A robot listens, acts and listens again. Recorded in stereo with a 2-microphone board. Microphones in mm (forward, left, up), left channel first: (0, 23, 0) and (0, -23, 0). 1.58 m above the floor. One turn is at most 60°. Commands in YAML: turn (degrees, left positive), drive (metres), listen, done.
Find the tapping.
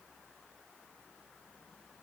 listen: true
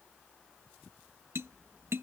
turn: -60
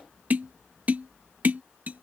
turn: -40
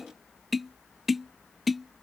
done: "Facing the tapping."